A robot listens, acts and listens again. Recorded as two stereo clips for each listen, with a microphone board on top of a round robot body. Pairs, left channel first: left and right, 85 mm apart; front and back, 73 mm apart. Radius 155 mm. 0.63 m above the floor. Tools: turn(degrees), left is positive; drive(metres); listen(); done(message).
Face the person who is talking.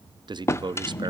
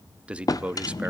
turn(degrees=-110)
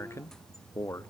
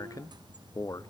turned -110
turn(degrees=35)
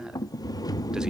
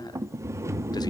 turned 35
listen()
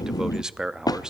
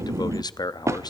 turn(degrees=-10)
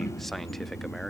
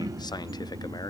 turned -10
listen()
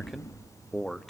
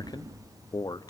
done("Found it: a man speaking, straight ahead, 1 to 2 m away.")